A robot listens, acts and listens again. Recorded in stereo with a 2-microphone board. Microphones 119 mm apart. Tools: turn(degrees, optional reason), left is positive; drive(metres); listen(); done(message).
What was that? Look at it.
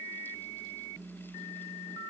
listen()
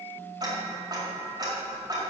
turn(degrees=-35, reason="The ticking: about 35° right or 145° right.")
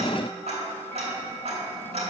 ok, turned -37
turn(degrees=-110, reason="So it is at 110° right.")
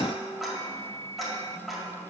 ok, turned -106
done("Facing the ticking.")